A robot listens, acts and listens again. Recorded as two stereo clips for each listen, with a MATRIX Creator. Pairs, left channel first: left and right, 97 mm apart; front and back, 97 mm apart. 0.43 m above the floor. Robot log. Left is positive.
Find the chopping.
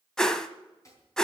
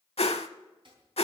note: The chopping: 150° left.
cmd yaw +150
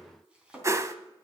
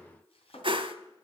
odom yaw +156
note: The chopping is now 10° right.
cmd yaw -10
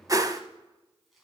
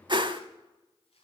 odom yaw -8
cmd idle
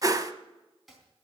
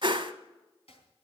end: Found it: chopping, straight ahead.